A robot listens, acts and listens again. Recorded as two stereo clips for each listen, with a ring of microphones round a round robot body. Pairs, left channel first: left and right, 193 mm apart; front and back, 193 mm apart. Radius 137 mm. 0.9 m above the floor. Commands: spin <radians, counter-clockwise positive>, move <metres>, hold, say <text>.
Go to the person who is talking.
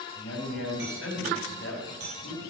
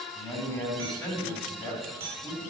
spin 1.22
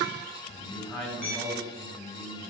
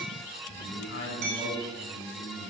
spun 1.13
move 1.0
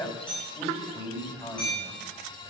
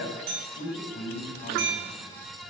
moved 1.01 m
move 1.0
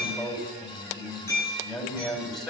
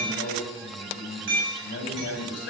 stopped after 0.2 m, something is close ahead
say Something is in my way. I am facing the man speaking but have not reached it.